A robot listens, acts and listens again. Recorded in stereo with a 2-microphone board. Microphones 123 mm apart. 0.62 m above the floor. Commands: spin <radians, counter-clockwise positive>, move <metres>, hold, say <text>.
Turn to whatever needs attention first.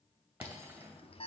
spin 0.87
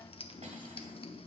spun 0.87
spin 1.13
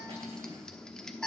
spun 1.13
say Found it: an alarm, straight ahead, under 1 m away.